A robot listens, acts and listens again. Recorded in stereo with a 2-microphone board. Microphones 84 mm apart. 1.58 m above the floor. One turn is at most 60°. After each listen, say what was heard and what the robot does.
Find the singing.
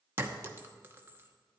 Keep listening.
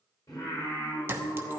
The singing: about 55° left or 125° left. Turn 55° left.
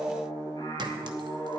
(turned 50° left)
So it is at 75° left. Turn 60° left.
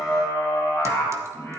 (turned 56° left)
The singing is now 20° left. Turn 20° left.
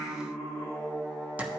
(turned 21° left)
Facing the singing, over 4 m away.